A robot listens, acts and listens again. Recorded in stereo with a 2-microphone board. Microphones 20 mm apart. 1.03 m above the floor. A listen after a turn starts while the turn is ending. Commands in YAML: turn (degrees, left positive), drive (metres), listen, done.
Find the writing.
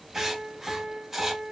turn: -30
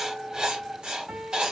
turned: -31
turn: -140
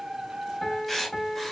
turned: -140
done: "Facing the writing."